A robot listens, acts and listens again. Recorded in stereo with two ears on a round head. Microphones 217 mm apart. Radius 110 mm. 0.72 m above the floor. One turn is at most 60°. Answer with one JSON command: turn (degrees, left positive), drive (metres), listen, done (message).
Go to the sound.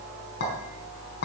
{"turn": 50}
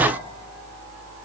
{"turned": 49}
{"listen": true}
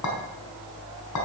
{"turn": 60}
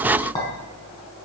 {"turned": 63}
{"turn": 20}
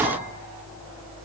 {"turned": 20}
{"listen": true}
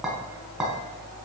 {"drive": 1.0}
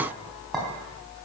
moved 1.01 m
{"drive": 1.0}
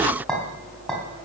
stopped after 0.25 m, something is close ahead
{"done": "Blocked. The clink is further on, straight ahead."}